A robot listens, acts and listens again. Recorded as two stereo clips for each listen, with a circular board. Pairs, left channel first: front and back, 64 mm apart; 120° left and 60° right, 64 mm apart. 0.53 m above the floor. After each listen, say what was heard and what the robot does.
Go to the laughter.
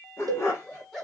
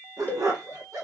The laughter: 90° right. Turn 90° right.
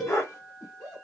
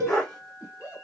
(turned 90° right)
Drive 1.0 m forward.
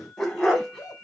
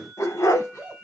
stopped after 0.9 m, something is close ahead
I am next to the laughter.